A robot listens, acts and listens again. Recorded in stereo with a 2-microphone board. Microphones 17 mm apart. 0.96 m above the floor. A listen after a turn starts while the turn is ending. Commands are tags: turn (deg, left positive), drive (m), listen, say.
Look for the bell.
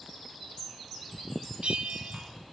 <turn deg="-70"/>
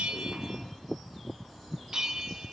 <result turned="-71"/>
<turn deg="-35"/>
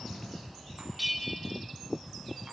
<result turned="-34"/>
<say>Facing the bell.</say>